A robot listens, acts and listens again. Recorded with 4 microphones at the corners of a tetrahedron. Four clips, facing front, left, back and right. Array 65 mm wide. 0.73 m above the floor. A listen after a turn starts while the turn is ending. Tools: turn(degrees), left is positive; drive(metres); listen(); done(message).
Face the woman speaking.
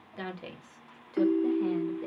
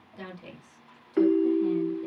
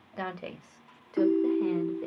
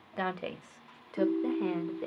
turn(degrees=-105)
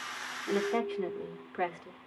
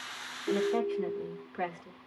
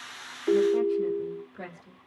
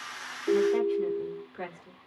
turn(degrees=20)
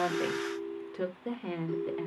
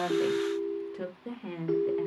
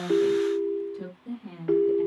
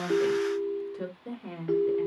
turn(degrees=10)
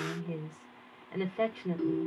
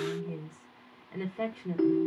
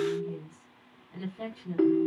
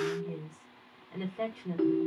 done("Facing the woman speaking, 2 to 4 m away.")